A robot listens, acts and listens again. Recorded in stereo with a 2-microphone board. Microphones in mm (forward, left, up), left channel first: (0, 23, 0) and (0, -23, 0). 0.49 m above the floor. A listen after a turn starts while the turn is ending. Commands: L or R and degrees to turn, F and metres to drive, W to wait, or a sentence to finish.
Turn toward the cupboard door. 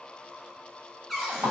L30
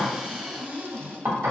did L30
R30
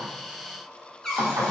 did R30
L10
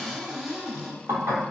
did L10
Found it: a cupboard door, straight ahead, under 1 m away.